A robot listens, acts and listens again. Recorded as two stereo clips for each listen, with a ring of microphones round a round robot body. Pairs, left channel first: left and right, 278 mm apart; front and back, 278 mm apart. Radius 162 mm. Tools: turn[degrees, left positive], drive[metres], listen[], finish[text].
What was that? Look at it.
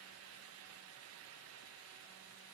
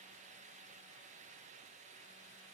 Action: listen[]
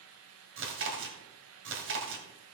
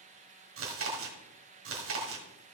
Thought: The chewing: 135° right.
Action: turn[-135]
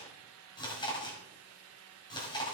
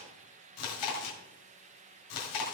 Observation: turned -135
Thought: The chewing is now 15° left.
Action: turn[15]
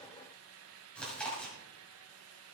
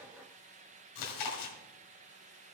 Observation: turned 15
Action: finish[Found it: chewing, straight ahead, 1 to 2 m away.]